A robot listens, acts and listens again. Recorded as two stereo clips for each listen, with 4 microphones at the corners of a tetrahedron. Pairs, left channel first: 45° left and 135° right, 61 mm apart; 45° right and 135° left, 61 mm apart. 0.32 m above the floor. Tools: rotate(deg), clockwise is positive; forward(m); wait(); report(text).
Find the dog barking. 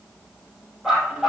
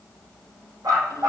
rotate(-140)
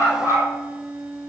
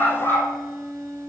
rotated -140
report("Facing the dog barking.")